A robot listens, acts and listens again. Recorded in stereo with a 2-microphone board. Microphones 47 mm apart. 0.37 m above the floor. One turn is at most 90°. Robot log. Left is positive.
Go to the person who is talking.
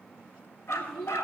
cmd yaw +30
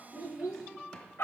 note: So it is at 20° right.
cmd yaw -20
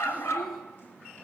cmd idle
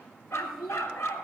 cmd fwd 1.0
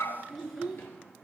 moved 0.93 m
cmd fwd 1.0
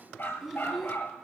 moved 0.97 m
cmd fwd 1.0
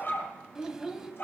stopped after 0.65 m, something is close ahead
note: The child speaking is now 15° right.
cmd yaw -15
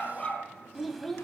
end: I am next to the child speaking.